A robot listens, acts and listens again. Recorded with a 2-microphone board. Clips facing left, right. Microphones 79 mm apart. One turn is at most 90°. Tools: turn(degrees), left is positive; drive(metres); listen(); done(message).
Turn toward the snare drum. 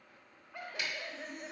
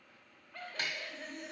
turn(degrees=-40)
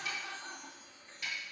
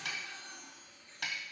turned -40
turn(degrees=-90)
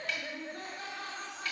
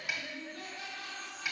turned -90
turn(degrees=-10)
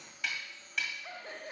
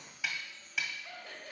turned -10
done("Found it: a snare drum, straight ahead.")